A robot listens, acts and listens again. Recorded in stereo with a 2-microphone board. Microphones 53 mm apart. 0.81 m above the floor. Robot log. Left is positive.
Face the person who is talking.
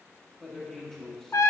cmd yaw +30
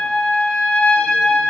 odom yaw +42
cmd idle
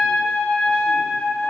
cmd idle
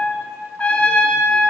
end: I heard a man speaking, but can't make it out now. It was about 30° right or 130° left.